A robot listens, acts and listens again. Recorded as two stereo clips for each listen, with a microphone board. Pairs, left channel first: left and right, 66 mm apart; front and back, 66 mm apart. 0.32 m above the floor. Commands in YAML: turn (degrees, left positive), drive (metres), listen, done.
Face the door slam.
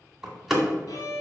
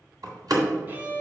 turn: -175
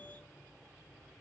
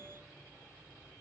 done: "I heard a door slam from this way, but can't make it out now."